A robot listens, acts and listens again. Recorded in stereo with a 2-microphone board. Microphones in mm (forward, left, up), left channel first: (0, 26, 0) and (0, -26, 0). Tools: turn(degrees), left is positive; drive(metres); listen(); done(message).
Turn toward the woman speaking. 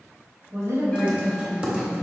turn(degrees=-70)
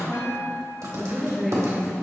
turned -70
turn(degrees=-10)
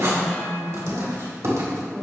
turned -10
done("Found it: a woman speaking, straight ahead.")